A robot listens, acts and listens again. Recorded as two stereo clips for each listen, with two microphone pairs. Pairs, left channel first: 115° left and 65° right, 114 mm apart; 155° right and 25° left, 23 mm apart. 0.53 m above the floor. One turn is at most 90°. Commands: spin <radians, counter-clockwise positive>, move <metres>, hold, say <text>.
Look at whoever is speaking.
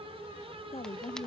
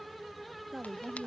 spin 1.57
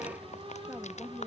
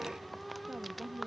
spin 0.26
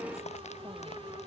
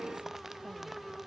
hold
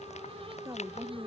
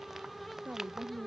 say Facing the woman speaking.